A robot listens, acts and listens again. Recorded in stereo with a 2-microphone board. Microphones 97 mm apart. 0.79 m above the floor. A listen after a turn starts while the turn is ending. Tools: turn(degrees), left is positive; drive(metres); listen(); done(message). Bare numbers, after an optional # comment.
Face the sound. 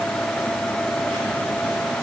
listen()
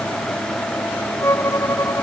# The violin: about 30° left or 150° left.
turn(30)
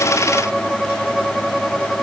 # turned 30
done("Found it: a violin, straight ahead.")